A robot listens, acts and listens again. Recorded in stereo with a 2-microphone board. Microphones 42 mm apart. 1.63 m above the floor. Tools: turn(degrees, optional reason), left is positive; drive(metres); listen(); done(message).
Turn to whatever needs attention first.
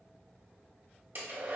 listen()
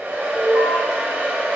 turn(degrees=55, reason="The alarm: about 55° left or 125° left.")
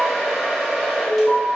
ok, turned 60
turn(degrees=55, reason="So it is at 55° left.")
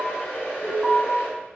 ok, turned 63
done("Found it: an alarm, straight ahead.")